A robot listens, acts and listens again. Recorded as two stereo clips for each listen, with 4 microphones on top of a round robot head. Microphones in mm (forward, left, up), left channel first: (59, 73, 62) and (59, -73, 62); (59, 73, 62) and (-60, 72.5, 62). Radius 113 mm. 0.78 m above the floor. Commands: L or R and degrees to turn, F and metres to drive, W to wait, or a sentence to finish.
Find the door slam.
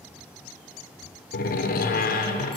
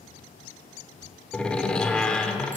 L80
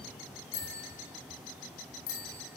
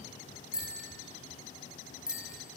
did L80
I heard a door slam from this way, but can't make it out now.